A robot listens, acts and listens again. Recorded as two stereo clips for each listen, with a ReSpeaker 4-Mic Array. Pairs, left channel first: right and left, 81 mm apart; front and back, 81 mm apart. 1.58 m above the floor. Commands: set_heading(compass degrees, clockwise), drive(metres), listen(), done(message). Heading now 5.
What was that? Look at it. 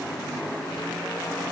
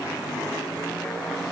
listen()
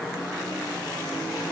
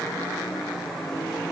listen()
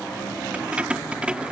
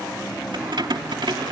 set_heading(200)
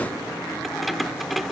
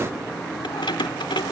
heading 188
done("Facing the keys jangling.")